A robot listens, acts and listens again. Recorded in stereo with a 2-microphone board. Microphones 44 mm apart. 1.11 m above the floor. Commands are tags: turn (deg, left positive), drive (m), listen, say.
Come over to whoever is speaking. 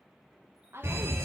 <turn deg="-65"/>
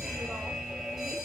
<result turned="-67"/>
<listen/>
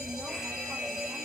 <listen/>
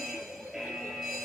<say>I heard a woman speaking, but can't make it out now. It was about straight ahead or 45° right. I did not reach it.</say>